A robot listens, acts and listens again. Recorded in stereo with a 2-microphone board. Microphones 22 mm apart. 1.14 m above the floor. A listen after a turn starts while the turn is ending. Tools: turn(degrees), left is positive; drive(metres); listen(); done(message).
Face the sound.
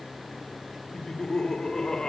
turn(degrees=30)
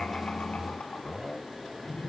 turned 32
turn(degrees=110)
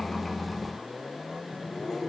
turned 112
done("Facing the laughter.")